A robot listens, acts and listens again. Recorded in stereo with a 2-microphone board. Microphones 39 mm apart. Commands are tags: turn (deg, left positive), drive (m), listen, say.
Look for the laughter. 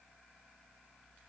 <listen/>
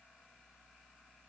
<listen/>
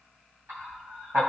<turn deg="-55"/>
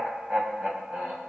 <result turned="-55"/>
<turn deg="-50"/>
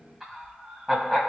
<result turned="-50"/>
<say>Facing the laughter, 1 to 2 m away.</say>